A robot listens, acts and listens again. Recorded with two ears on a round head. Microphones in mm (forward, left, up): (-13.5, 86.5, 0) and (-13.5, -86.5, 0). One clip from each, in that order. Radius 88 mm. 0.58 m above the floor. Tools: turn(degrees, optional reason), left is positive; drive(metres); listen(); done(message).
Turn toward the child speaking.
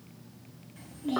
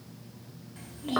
turn(degrees=-20, reason="The child speaking: about 20° right or 160° right.")
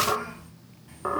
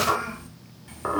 turn(degrees=-130, reason="So it is at 130° right.")
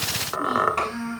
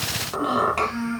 done("Facing the child speaking.")